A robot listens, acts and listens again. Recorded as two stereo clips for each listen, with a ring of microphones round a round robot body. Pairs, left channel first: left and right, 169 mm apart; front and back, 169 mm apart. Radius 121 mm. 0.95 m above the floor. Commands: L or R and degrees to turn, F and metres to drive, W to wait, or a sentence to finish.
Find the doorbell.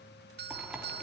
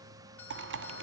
R80
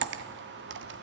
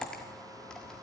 W
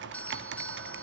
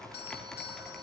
L10
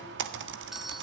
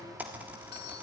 W
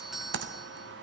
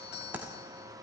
Found it: a doorbell, straight ahead, 1 to 2 m away.